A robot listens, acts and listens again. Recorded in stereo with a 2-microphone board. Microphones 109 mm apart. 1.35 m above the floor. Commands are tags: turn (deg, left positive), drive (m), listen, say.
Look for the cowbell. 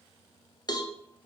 <turn deg="40"/>
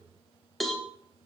<say>Found it: a cowbell, straight ahead, under 1 m away.</say>